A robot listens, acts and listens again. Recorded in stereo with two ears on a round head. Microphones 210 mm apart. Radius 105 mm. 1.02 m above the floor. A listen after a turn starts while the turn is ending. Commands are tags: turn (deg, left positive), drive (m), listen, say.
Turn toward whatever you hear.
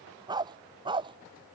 <turn deg="-20"/>
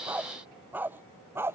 <turn deg="-30"/>
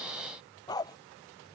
<turn deg="15"/>
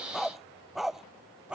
<say>Facing the dog barking.</say>